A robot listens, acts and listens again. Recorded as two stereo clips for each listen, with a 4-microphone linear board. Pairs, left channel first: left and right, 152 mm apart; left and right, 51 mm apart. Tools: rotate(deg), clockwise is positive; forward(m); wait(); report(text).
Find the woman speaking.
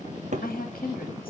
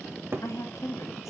rotate(-90)
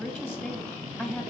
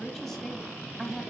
rotate(-10)
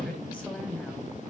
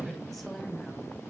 wait()
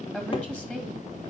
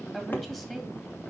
rotate(-10)
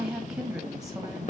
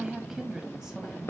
report("Found it: a woman speaking, straight ahead, 1 to 2 m away.")